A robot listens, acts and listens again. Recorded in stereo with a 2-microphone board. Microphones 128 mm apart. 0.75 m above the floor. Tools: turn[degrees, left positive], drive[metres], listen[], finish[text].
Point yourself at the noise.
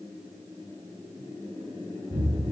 Thought: The explosion: about 65° right or 115° right.
Action: turn[-65]
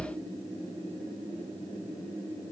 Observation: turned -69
Thought: So it is at 45° right.
Action: turn[-45]
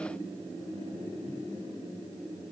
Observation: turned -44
Action: finish[Facing where the explosion came from. I can't hear it now.]